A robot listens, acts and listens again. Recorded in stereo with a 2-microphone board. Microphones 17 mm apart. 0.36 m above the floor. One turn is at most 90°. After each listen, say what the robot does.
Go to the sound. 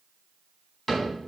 Turn 30° left.
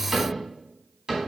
Turn 25° right.
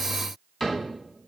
Drive 1.0 m forward.
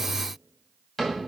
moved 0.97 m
Turn 10° left.
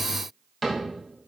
Drive 1.0 m forward.
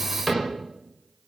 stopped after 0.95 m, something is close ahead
Arrived at the cupboard door, straight ahead.